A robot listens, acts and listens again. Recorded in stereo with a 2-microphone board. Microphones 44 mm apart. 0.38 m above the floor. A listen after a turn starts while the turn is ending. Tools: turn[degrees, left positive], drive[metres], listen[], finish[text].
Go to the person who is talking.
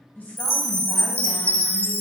Thought: The woman speaking: about 40° left or 140° left.
Action: turn[40]
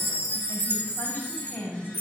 Thought: So it is at 85° left.
Action: turn[85]
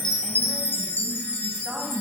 Thought: The woman speaking is now 25° right.
Action: turn[-25]
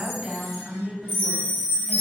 Thought: The woman speaking is now 15° right.
Action: turn[-15]
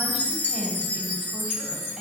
Action: listen[]
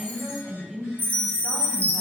Action: drive[1.0]
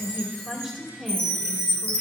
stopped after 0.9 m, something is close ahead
Thought: The woman speaking is now 10° right.
Action: turn[-10]
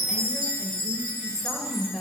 Action: finish[I am next to the woman speaking.]